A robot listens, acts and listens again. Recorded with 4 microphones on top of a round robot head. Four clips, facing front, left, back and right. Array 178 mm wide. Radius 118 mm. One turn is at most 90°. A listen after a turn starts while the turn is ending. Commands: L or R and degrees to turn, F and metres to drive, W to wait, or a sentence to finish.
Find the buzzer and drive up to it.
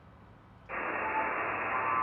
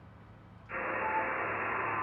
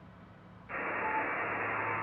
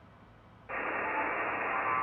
R70
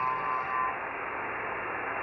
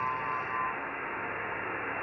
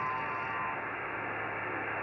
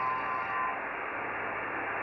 R40
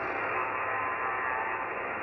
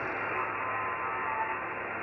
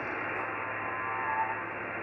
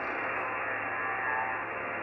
F1.0
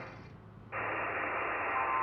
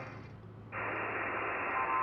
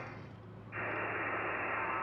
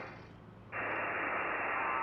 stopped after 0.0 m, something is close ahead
Something is in my way. I am facing the buzzer but have not reached it.